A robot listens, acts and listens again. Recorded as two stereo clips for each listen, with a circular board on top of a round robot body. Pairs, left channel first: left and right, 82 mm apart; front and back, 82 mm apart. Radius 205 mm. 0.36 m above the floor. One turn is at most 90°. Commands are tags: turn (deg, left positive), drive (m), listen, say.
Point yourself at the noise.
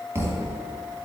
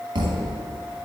<turn deg="-90"/>
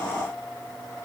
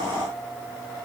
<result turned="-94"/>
<turn deg="-55"/>
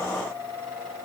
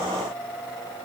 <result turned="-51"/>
<say>Facing where the thud came from. I can't hear it now.</say>